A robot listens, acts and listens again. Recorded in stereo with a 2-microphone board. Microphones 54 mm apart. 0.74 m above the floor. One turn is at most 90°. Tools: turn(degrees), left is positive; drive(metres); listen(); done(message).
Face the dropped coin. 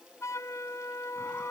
listen()
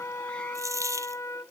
turn(degrees=-90)
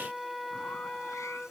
done("Facing where the dropped coin came from. I can't hear it now.")